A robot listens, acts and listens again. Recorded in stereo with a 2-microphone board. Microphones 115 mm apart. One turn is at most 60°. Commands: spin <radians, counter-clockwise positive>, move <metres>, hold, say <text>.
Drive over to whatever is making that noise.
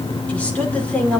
spin 0.52
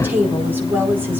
spin -0.26
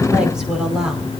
move 1.0
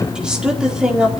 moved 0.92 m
move 1.0
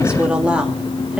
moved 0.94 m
spin -0.17
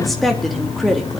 move 1.0
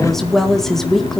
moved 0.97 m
move 1.0
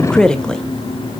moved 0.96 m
move 1.0
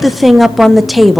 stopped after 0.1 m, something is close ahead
say Arrived at the woman speaking, straight ahead.